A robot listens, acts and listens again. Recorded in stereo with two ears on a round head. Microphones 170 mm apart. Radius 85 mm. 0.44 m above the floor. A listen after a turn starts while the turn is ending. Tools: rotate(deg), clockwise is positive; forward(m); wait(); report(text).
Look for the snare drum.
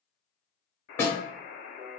rotate(-30)
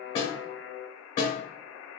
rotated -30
rotate(-135)
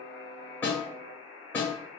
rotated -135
rotate(-10)
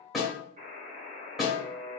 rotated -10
report("Found it: a snare drum, straight ahead, 1 to 2 m away.")